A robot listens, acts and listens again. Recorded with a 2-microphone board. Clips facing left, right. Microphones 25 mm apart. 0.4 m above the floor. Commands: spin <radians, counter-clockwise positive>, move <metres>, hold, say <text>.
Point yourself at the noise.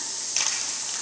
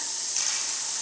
spin 0.70
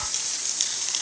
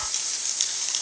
say Facing the crushing.